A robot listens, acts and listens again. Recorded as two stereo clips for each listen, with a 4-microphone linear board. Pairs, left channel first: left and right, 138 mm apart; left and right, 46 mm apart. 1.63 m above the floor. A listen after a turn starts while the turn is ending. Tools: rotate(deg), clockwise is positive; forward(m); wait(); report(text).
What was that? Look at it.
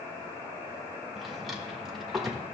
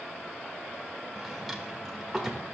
rotate(-30)
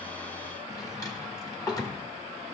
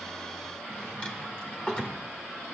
rotate(-150)
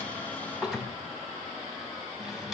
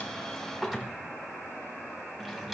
report("Found it: a drawer, straight ahead, 1 to 2 m away.")